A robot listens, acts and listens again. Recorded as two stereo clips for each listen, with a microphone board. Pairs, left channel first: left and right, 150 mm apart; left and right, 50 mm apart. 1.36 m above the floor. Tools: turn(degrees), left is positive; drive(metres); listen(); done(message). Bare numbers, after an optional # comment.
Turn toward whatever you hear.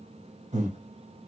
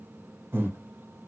# The breathing: about 55° right or 125° right.
turn(-55)
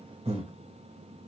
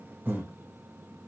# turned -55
# So it is at 55° right.
turn(-55)
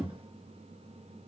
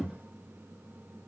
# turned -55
# The breathing is now 10° right.
turn(-10)
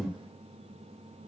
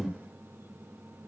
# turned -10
done("Found it: breathing, straight ahead.")